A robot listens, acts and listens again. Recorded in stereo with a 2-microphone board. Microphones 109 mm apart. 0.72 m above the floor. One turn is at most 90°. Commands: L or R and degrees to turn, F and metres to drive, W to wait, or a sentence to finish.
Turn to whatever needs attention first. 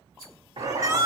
R30
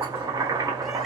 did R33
W
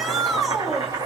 Facing the shout.